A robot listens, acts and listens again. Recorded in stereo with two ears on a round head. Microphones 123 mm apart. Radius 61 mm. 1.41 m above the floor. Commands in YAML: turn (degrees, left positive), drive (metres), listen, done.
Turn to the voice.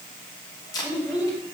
turn: 30
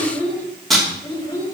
turn: 140
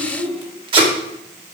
done: "Found it: a child speaking, straight ahead, 2 to 4 m away."